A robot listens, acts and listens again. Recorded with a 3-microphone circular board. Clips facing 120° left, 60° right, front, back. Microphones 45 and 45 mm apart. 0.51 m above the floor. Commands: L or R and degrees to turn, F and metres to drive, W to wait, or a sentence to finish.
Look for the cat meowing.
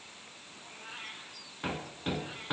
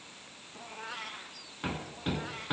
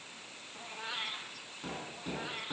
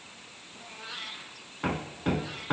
R70
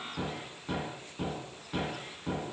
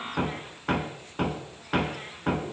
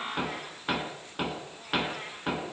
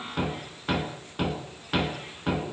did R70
W
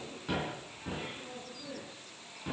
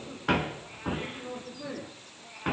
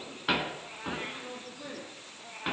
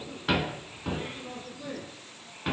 Found it: a cat meowing, straight ahead.